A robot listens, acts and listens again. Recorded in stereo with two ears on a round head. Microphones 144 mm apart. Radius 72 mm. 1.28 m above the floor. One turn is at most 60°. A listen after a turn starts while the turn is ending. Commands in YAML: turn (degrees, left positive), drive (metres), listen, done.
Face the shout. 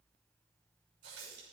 listen: true
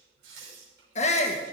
turn: 45
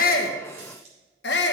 turn: 60
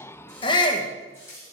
turn: 30
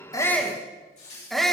done: "Facing the shout, 1 to 2 m away."